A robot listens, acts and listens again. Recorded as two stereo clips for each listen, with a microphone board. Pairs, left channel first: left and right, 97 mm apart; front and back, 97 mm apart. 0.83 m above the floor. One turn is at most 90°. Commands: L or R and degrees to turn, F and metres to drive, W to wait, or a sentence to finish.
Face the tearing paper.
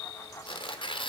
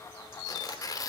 L55
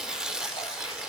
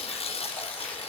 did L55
Found it: tearing paper, straight ahead.